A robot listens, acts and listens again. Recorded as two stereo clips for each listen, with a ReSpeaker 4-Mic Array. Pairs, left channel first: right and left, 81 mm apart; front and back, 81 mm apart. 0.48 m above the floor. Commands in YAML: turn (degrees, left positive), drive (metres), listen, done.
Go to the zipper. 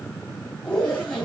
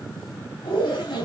turn: -10
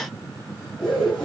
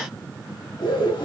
drive: 1.0
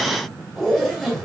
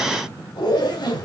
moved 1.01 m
drive: 1.0
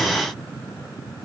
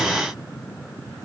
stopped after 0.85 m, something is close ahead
listen: true
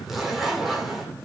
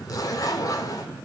done: "Arrived at the zipper, straight ahead."